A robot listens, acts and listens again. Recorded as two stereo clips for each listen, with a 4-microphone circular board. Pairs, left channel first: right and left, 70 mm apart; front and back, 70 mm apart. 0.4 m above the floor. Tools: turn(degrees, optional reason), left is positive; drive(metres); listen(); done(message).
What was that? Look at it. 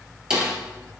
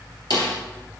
turn(degrees=10, reason="The snare drum: 10° left.")
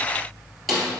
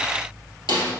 done("Found it: a snare drum, straight ahead, 2 to 4 m away.")